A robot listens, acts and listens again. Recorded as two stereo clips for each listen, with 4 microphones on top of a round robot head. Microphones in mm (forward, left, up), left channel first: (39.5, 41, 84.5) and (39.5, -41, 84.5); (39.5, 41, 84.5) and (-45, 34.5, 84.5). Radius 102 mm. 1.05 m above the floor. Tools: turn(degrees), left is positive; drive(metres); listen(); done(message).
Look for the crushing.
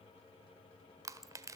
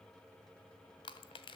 turn(degrees=-40)
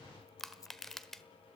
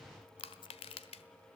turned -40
done("Found it: crushing, straight ahead, 1 to 2 m away.")